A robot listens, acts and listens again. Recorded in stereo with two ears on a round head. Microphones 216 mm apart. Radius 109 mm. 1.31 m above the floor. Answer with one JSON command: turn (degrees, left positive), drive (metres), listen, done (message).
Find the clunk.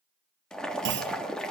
{"turn": -50}
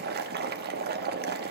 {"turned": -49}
{"listen": true}
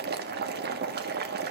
{"done": "I heard a clunk, but can't make it out now. It was about straight ahead or 85° right."}